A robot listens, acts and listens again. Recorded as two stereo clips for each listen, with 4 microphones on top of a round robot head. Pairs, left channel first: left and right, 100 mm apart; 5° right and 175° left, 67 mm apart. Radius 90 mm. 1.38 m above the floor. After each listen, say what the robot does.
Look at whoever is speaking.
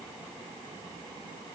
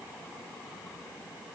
Keep listening.
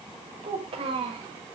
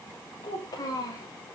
Turn 50° right.
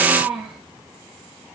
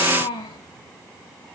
Facing the child speaking, over 4 m away.